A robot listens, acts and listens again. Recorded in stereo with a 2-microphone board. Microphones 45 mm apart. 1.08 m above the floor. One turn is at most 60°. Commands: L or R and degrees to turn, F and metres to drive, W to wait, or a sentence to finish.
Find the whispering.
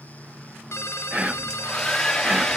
R25
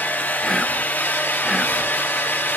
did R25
Found it: whispering, straight ahead.